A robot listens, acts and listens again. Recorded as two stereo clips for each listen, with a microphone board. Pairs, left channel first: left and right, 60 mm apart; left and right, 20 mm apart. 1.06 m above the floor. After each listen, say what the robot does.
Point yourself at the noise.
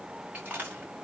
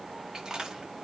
Turn 30° right.
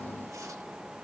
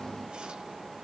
Keep listening.
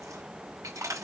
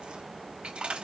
Turn 120° right.
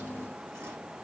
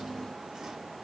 Keep listening.
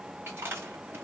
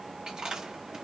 Turn 40° right.
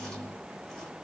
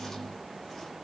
Keep listening.
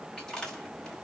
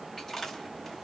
Turn 10° left.
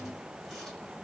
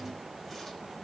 Keep listening.
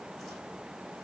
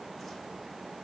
Keep listening.
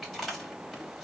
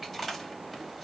Found it: chewing, straight ahead.